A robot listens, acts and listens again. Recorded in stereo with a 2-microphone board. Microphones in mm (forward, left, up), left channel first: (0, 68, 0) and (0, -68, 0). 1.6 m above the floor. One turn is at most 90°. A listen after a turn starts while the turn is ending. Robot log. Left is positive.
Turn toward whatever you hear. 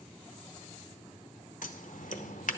note: The scissors: about 70° left or 110° left.
cmd yaw +70
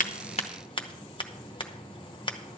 note: So it is at 35° left.
cmd yaw +35
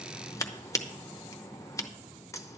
note: The scissors is now 25° left.
cmd yaw +25
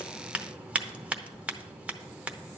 note: The scissors is now 10° right.
cmd yaw -10
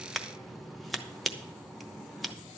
end: Facing the scissors, under 1 m away.